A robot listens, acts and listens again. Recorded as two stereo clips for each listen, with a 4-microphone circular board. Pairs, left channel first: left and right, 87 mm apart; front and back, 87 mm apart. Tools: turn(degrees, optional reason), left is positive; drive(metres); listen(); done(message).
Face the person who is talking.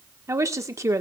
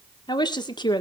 turn(degrees=-35, reason="The woman speaking: 35° right.")
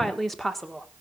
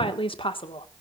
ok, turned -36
done("Found it: a woman speaking, straight ahead, 1 to 2 m away.")